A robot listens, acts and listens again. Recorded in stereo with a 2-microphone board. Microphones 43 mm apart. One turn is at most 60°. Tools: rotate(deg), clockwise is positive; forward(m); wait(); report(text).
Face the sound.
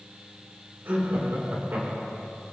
rotate(60)
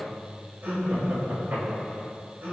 rotate(40)
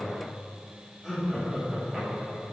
report("Found it: laughter, straight ahead, over 4 m away.")